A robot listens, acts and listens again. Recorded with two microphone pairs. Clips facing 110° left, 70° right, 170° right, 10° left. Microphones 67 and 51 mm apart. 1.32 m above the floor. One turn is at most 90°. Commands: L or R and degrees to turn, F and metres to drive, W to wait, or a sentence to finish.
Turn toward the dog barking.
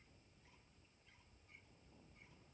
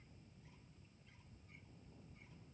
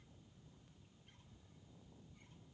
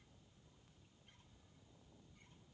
W
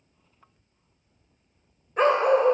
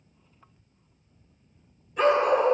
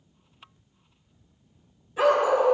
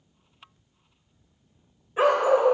L65
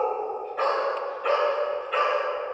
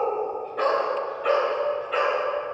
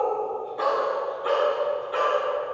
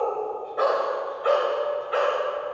L20
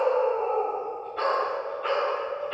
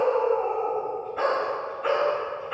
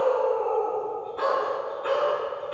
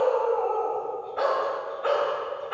Found it: a dog barking, straight ahead, 2 to 4 m away.